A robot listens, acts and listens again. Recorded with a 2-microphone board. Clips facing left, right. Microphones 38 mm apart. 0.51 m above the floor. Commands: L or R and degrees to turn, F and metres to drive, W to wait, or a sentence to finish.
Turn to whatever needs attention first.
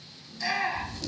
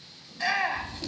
R30
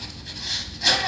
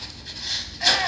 R115
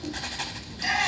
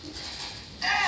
R25
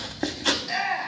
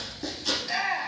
R10
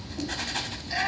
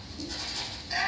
Found it: a shout, straight ahead, 2 to 4 m away.